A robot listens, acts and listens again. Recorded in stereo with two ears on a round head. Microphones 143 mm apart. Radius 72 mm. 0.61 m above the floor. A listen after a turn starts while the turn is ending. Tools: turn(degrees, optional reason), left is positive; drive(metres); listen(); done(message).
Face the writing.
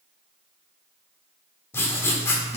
turn(degrees=15, reason="The writing: about 15° left or 165° left.")
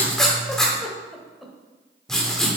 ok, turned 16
done("Found it: writing, straight ahead.")